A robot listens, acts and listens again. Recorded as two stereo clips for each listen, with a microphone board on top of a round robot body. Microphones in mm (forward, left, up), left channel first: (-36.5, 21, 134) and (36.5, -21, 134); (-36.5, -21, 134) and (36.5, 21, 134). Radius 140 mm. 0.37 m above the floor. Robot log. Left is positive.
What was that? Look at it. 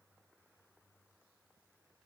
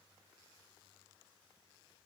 cmd idle
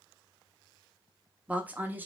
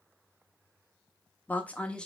note: The woman speaking: 75° right.
cmd yaw -75
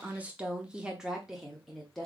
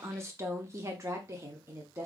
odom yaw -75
note: The woman speaking is now 65° left.
cmd yaw +65
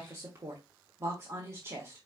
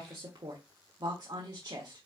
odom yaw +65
note: The woman speaking is now 10° left.
cmd yaw +10
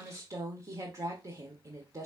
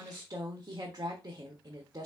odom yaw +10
end: Found it: a woman speaking, straight ahead, 1 to 2 m away.